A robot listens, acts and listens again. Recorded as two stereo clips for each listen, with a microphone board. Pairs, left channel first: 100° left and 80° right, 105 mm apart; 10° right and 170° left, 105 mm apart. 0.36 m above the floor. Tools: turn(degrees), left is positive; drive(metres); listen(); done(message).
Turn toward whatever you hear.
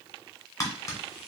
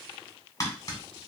turn(degrees=45)
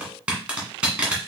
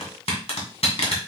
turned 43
done("Facing the tapping.")